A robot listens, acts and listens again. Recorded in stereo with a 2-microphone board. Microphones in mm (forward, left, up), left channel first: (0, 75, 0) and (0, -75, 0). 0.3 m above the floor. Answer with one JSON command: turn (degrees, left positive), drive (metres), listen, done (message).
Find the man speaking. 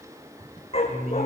{"turn": -65}
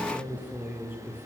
{"turn": -15}
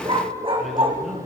{"listen": true}
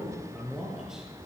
{"done": "Found it: a man speaking, straight ahead."}